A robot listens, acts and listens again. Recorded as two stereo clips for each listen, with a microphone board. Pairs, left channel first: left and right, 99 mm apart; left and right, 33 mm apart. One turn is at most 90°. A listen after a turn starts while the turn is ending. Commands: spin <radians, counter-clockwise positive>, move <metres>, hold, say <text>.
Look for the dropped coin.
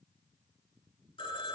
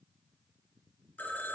hold
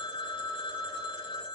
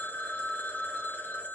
hold
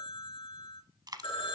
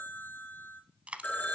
spin -0.79
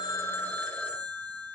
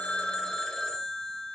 hold
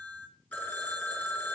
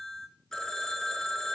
say I heard a dropped coin, but can't make it out now. It was about straight ahead or 90° right.